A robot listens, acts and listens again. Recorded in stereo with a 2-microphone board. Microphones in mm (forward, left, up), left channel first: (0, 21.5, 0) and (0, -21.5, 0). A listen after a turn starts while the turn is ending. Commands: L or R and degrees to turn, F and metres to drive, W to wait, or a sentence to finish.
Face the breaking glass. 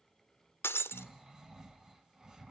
L70
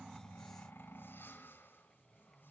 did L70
W
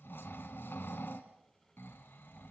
I heard breaking glass, but can't make it out now. It was about straight ahead or 40° left.